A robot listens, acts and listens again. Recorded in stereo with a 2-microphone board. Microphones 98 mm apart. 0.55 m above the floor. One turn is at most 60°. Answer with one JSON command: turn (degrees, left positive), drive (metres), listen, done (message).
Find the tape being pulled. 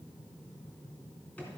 {"listen": true}
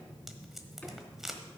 {"turn": -30}
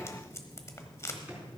{"turn": 30}
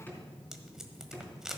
{"done": "Facing the tape being pulled."}